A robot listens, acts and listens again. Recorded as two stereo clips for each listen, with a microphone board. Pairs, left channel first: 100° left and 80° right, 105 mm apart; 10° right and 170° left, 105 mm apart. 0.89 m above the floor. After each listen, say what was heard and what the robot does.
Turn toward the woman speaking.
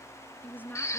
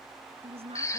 The woman speaking: 175° left. Turn 175° left.
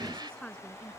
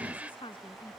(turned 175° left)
The woman speaking is now 20° left. Turn 20° left.
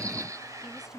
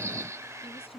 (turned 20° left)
Found it: a woman speaking, straight ahead.